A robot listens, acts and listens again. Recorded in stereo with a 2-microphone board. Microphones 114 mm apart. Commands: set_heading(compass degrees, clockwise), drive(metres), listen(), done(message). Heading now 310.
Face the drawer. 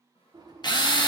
set_heading(350)
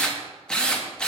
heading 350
listen()
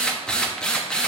listen()
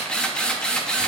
done("I heard a drawer, but can't make it out now. It was about straight ahead or 100° right.")